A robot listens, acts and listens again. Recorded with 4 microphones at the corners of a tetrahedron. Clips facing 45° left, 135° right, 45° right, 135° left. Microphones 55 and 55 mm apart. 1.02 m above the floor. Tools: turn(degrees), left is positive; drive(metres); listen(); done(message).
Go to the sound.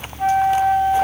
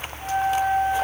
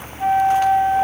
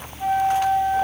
turn(degrees=20)
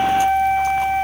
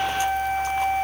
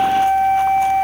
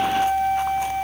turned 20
drive(metres=1.0)
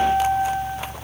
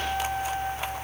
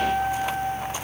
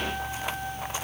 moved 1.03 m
drive(metres=1.0)
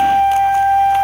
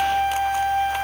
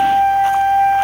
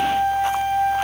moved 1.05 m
turn(degrees=-10)
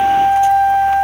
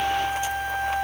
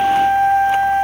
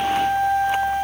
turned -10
drive(metres=1.0)
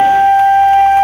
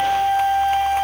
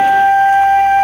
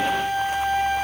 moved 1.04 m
drive(metres=1.0)
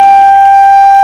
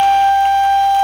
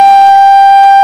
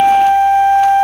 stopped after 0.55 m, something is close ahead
done("Arrived at the flute, straight ahead.")